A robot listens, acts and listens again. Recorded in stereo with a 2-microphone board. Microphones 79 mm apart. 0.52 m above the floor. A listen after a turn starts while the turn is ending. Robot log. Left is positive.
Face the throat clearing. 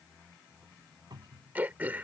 note: The throat clearing: about 20° right or 160° right.
cmd yaw -20
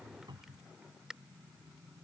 note: So it is at 10° right.
cmd yaw -10
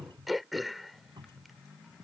end: Found it: throat clearing, straight ahead.